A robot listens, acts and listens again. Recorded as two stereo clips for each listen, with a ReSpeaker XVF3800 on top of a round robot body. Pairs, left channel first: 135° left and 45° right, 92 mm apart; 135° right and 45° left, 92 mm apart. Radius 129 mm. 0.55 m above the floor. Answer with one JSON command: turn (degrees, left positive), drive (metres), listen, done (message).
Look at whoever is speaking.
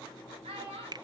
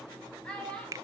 {"turn": -55}
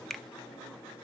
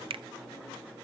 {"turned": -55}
{"listen": true}
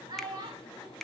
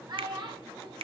{"done": "Facing the child speaking, 2 to 4 m away."}